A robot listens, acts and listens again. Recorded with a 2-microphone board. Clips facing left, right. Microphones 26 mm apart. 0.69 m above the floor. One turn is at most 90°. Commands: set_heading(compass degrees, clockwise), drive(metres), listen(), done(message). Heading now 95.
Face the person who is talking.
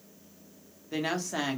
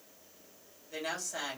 set_heading(60)
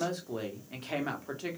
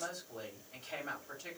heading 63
set_heading(333)
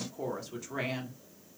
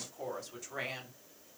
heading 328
set_heading(318)
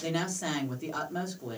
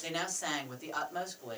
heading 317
done("Facing the woman speaking, 1 to 2 m away.")